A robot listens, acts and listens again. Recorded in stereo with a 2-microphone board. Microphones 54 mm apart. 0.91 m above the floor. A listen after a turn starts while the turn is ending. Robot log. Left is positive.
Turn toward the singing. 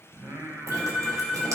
note: The singing: about 50° right or 130° right.
cmd yaw -50
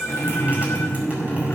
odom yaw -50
cmd idle
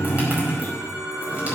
cmd idle
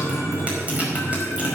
end: I heard singing, but can't make it out now. It was about straight ahead or 80° right.